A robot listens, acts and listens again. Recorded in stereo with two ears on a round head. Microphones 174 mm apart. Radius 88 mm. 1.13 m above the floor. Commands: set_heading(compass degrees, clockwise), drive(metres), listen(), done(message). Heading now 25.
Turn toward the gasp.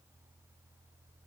listen()
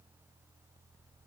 listen()
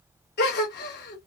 set_heading(330)
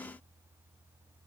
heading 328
listen()
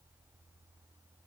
done("I heard a gasp, but can't make it out now. It was about 5° right or 70° left.")